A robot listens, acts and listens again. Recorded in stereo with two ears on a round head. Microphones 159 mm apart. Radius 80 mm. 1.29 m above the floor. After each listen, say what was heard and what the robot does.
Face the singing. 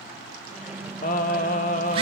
The singing: about 45° left or 135° left. Turn 45° left.
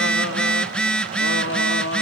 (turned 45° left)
So it is at 80° left. Turn 80° left.
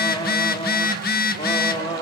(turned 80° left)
The singing is now 25° left. Turn 25° left.
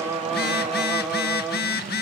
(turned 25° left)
Found it: singing, straight ahead, over 4 m away.